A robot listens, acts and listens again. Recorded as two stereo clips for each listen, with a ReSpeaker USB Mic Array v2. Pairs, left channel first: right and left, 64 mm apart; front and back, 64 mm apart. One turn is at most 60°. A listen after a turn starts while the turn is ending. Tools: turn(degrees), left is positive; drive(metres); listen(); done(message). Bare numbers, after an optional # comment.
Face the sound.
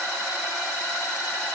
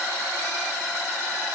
listen()
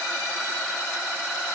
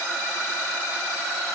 listen()
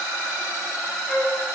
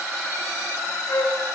# The flute: 10° right.
turn(-10)
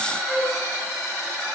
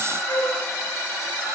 done("Found it: a flute, straight ahead, 1 to 2 m away.")